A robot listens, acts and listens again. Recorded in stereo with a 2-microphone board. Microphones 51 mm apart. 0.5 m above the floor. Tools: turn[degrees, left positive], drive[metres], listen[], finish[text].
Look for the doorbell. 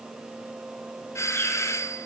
Thought: The doorbell: about 65° left or 115° left.
Action: turn[65]
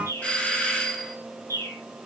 Thought: So it is at 25° left.
Action: turn[25]
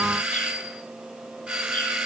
Thought: The doorbell is now 15° right.
Action: turn[-15]
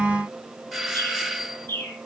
Action: finish[Facing the doorbell.]